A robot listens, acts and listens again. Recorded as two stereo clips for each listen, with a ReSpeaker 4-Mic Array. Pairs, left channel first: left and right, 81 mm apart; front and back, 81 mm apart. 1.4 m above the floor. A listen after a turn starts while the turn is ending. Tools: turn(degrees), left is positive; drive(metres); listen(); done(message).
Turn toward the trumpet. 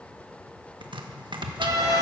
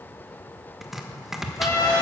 turn(degrees=-45)
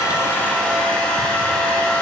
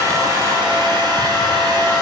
listen()
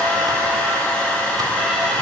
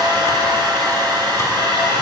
listen()
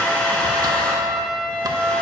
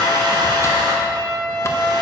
done("Found it: a trumpet, straight ahead.")